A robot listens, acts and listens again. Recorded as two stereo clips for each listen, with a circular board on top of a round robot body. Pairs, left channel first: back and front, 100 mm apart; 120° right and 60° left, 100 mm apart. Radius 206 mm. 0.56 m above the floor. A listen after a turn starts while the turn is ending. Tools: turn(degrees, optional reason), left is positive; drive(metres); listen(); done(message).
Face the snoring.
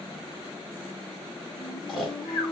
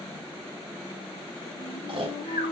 turn(degrees=95, reason="The snoring: 95° left.")
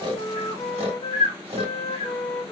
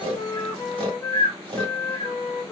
turn(degrees=25, reason="The snoring is now 25° left.")
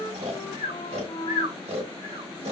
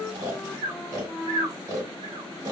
done("Facing the snoring, 1 to 2 m away.")